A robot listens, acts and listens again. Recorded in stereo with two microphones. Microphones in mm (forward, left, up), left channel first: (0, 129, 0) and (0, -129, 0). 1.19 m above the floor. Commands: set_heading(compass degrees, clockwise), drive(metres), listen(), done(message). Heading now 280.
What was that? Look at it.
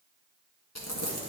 set_heading(190)
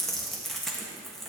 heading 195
done("Facing the crumpling, 1 to 2 m away.")